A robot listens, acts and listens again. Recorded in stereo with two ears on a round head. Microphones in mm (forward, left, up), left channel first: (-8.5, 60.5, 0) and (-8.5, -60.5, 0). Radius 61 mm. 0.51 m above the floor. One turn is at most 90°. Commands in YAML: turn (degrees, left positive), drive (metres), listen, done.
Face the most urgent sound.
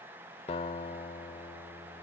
listen: true
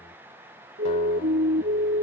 turn: -70
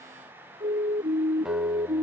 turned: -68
turn: -40
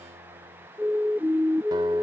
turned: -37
done: "Found it: a siren, straight ahead."